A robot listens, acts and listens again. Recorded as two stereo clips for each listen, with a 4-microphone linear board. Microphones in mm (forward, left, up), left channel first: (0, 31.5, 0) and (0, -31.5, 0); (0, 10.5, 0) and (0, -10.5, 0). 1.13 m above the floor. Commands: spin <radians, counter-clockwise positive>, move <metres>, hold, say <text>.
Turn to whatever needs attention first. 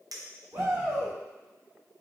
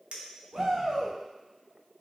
spin -1.05
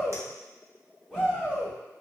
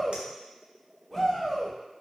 spin -0.26
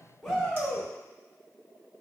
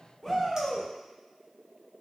say Facing the shout.